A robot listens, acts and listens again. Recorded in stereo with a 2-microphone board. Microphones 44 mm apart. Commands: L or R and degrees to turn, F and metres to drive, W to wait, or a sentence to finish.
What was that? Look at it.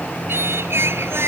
R90
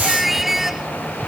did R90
R10
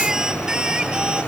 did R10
R20
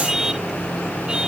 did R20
R15
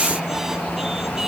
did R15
W
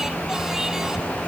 W
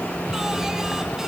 Facing where the singing came from. I can't hear it now.